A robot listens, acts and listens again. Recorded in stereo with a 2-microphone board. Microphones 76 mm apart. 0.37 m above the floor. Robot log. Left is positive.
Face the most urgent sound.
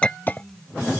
cmd idle
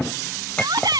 note: The shout: about 70° right or 110° right.
cmd yaw -70
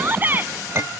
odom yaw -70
note: So it is at 30° right.
cmd yaw -30
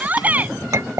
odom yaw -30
note: The shout is now 25° right.
cmd yaw -25
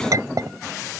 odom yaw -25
cmd idle
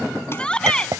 note: The shout is now 15° left.
cmd yaw +15
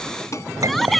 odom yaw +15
end: Facing the shout.